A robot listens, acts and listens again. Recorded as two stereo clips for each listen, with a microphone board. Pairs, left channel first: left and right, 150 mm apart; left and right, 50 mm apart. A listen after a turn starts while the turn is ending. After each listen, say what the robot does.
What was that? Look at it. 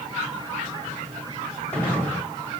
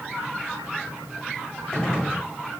Turn 30° left.
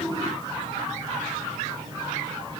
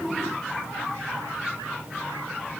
Keep listening.
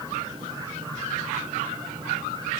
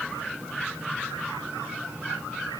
I heard a gunshot, but can't make it out now. It was about 20° right or 140° left.